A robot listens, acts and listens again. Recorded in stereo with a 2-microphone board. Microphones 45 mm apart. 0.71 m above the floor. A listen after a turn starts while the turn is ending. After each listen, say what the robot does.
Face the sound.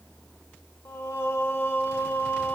Turn 55° left.
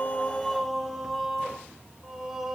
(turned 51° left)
Turn 15° right.
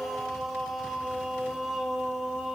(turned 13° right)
Turn 10° right.
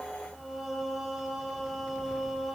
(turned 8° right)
Facing the singing, 2 to 4 m away.